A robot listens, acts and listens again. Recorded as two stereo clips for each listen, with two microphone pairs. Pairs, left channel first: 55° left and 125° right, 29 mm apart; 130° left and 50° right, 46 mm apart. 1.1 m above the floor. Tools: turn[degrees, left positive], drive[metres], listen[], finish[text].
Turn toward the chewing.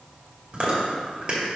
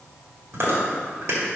Thought: The chewing: 70° right.
Action: turn[-70]
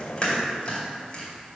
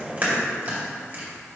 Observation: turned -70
Thought: The chewing is now 10° left.
Action: turn[10]
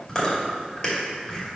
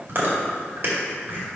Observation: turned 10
Action: finish[Found it: chewing, straight ahead.]